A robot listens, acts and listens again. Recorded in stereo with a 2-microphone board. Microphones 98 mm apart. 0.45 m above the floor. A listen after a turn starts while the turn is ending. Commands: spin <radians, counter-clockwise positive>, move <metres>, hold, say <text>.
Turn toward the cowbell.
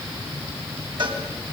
spin -0.87
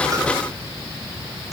hold
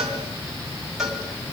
say Found it: a cowbell, straight ahead, over 4 m away.